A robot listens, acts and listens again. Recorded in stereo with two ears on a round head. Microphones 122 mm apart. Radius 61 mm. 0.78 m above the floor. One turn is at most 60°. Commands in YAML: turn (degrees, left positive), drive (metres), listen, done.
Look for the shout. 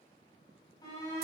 turn: 30
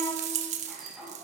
done: "Found it: a shout, straight ahead."